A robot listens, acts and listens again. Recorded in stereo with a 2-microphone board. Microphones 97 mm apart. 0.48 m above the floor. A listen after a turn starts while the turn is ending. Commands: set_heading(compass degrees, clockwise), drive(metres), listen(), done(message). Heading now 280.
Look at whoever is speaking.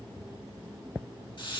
listen()
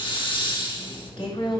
set_heading(220)
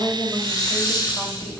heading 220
listen()
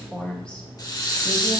set_heading(210)
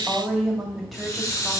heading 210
done("Found it: a woman speaking, straight ahead.")